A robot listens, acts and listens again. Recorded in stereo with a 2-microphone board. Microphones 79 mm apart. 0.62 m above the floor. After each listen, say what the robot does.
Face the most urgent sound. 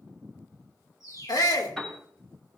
Turn 60° left.
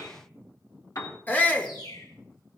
Turn 30° left.
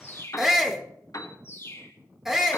Facing the shout, 1 to 2 m away.